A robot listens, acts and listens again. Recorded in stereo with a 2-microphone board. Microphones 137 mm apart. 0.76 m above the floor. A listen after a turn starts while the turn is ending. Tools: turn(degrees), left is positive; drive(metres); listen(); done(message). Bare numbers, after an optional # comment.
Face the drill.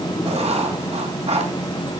listen()
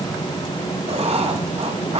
listen()
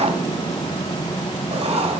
done("I can't make out a drill to turn to.")